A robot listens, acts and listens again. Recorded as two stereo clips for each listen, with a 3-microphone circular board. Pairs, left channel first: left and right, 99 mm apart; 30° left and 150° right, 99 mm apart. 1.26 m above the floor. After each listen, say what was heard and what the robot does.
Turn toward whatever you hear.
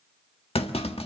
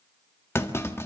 The clunk: 95° left. Turn 95° left.
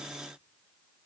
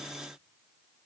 Facing where the clunk came from. I can't hear it now.